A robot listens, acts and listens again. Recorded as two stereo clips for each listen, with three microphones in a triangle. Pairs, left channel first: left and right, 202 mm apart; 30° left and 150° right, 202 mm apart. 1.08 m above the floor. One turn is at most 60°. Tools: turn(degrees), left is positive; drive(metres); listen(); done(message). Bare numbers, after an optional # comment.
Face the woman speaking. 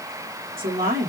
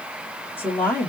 # The woman speaking: 55° right.
turn(-55)
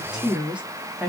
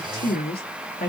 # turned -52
# The woman speaking is now 10° right.
turn(-10)
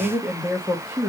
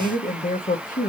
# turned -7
# The woman speaking is now 15° right.
turn(-15)
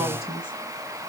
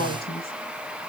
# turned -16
done("Found it: a woman speaking, straight ahead.")